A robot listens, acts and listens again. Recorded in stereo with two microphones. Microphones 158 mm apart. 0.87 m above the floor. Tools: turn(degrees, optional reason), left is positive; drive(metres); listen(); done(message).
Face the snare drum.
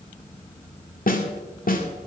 turn(degrees=65, reason="The snare drum: about 65° left or 115° left.")
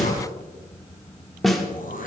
done("Found it: a snare drum, straight ahead.")